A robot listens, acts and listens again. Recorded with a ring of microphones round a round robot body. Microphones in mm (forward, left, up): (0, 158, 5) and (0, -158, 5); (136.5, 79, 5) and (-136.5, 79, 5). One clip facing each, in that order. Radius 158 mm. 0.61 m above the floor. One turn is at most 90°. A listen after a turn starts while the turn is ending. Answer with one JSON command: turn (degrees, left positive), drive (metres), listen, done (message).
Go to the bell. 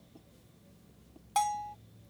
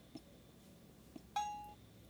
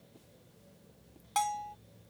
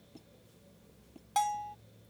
{"turn": 80}
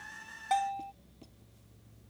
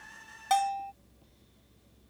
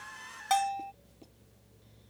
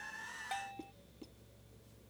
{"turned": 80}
{"turn": -35}
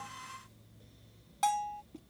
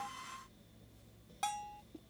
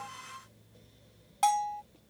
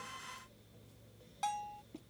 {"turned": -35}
{"turn": 10}
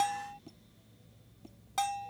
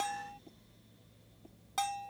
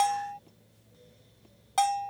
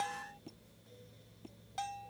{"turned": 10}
{"drive": 1.0}
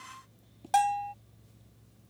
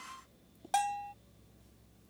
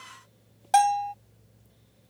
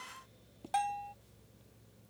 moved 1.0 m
{"drive": 1.0}
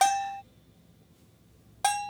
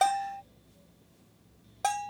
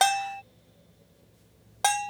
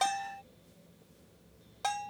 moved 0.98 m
{"turn": 15}
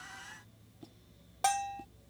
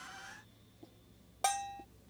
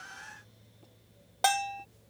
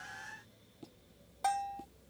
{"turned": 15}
{"drive": 1.0}
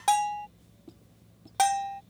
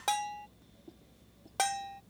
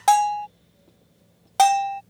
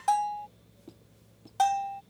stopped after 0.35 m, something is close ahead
{"done": "Arrived at the bell, straight ahead."}